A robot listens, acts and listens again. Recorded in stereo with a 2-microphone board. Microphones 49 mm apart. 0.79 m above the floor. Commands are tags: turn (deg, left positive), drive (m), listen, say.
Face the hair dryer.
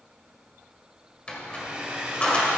<turn deg="-20"/>
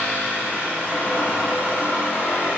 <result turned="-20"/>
<listen/>
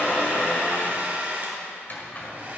<turn deg="-140"/>
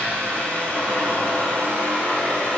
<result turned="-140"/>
<listen/>
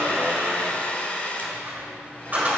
<turn deg="35"/>
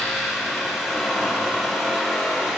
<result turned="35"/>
<listen/>
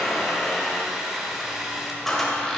<turn deg="-10"/>
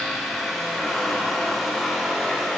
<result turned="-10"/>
<listen/>
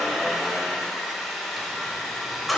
<say>Facing the hair dryer.</say>